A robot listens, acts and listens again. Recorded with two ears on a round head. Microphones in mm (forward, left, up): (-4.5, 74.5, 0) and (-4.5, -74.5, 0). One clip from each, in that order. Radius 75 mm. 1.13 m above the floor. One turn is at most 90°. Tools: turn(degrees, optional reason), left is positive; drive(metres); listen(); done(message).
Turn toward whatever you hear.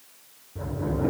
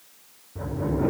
turn(degrees=-20, reason="The sliding door: about 20° right or 160° right.")
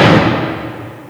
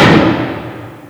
turn(degrees=-90, reason="So it is at 140° right.")
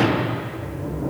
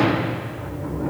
turn(degrees=-45, reason="The sliding door is now 45° right.")
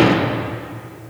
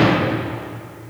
done("Facing the sliding door.")